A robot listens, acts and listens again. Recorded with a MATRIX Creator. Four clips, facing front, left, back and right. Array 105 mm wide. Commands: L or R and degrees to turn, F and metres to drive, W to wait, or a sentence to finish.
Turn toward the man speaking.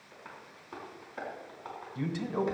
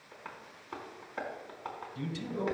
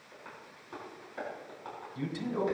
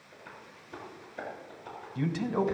R75
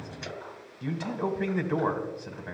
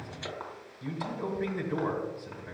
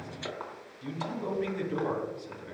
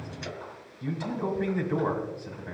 R10
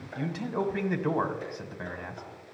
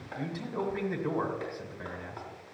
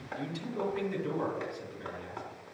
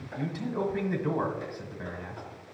Facing the man speaking.